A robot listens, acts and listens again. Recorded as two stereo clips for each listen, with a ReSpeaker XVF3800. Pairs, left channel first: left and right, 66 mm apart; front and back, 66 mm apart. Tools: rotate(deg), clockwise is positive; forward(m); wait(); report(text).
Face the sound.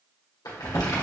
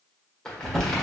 rotate(-80)
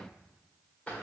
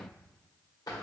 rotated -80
rotate(-20)
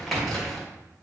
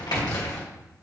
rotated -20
report("Found it: crumpling, straight ahead, 1 to 2 m away.")